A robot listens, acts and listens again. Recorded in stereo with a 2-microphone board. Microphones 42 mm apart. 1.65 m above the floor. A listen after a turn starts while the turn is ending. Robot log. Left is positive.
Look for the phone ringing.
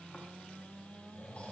cmd idle
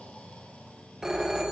cmd yaw -30
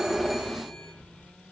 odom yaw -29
note: So it is at 15° left.
cmd yaw +15
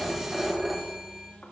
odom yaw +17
end: Facing the phone ringing.